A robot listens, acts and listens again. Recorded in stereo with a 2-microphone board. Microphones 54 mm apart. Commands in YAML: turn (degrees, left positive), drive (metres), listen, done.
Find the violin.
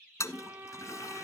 turn: -45
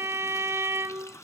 turn: -80
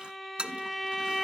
done: "Found it: a violin, straight ahead, under 1 m away."